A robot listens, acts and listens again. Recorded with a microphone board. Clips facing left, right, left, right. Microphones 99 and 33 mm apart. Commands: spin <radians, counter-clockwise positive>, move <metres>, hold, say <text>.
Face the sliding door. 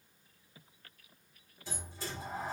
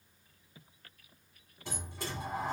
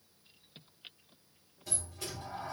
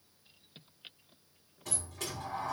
spin -1.13
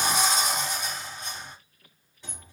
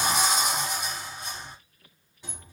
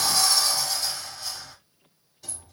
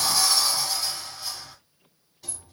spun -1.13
say Found it: a sliding door, straight ahead, 1 to 2 m away.